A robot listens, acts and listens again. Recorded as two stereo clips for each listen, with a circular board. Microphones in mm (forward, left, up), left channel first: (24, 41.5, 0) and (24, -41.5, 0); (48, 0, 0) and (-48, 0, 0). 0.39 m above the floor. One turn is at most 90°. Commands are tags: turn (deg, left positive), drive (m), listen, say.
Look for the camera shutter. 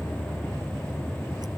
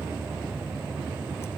<listen/>
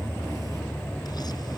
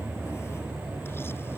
<listen/>
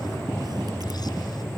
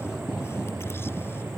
<say>I can't make out a camera shutter to turn to.</say>